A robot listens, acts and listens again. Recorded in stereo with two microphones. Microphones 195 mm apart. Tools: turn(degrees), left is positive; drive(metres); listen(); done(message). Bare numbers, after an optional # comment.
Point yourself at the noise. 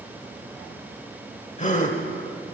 # The gasp: about 40° left or 140° left.
turn(40)
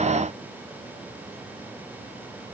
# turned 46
listen()
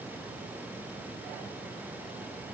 done("I heard a gasp, but can't make it out now. It was about 10° right or 95° left.")